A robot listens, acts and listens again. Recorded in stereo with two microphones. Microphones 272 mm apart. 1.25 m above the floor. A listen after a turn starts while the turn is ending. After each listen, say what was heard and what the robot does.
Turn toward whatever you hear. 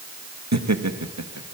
Turn 90° right.
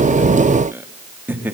Found it: laughter, straight ahead, 2 to 4 m away.